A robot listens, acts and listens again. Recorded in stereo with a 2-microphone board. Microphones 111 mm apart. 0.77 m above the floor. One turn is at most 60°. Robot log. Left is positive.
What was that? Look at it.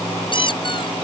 note: The squeak: about 45° left or 135° left.
cmd yaw +45
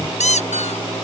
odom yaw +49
note: So it is at 85° left.
cmd yaw +60
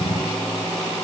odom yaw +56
note: Nothing new. It was at 30° left.
cmd yaw +30
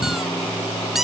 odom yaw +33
end: Facing the squeak.